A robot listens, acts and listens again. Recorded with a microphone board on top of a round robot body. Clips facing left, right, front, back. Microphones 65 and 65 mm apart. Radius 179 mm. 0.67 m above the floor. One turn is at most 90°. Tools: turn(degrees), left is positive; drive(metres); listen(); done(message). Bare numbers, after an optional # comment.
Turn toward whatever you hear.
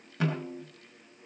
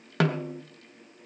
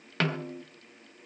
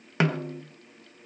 # The snare drum: 105° right.
turn(-90)
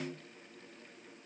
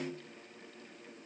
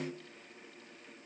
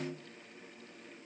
# The snare drum is now 30° right.
turn(-30)
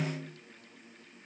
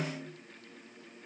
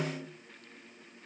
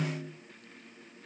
# The snare drum is now 10° right.
turn(-10)
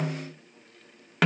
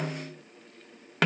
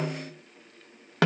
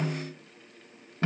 done("Found it: a snare drum, straight ahead.")